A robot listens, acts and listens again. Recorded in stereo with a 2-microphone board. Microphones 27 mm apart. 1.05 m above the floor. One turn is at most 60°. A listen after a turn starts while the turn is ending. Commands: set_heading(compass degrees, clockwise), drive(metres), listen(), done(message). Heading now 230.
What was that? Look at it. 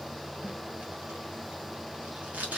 set_heading(290)
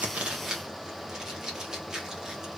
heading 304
set_heading(324)
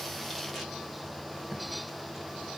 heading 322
listen()
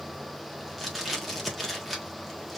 done("Facing the tape being pulled, 1 to 2 m away.")